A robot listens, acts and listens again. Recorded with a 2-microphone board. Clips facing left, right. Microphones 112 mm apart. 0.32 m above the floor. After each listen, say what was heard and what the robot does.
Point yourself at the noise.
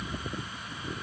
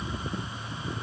Keep listening.
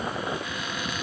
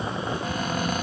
The cupboard door: about 45° right or 135° right. Turn 45° right.
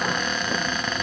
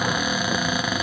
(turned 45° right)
So it is at 10° right. Turn 10° right.
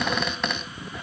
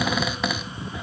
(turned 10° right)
Facing the cupboard door, 1 to 2 m away.